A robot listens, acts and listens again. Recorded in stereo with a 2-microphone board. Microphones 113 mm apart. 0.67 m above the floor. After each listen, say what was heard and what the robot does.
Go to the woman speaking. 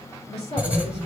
The woman speaking: about 65° left or 115° left. Turn 65° left.
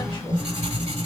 Keep listening.
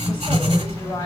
So it is at 45° left. Turn 45° left.
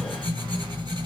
Keep listening.
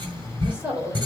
The woman speaking is now 10° right. Turn 10° right.
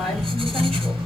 Keep listening.
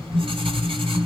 Keep listening.
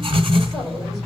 Facing where the woman speaking came from. I can't hear it now. I did not reach it.